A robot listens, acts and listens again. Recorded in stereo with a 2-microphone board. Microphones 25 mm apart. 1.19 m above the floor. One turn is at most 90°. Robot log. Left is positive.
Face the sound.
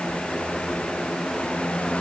cmd idle
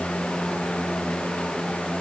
cmd idle
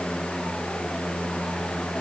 end: I can't make out anything.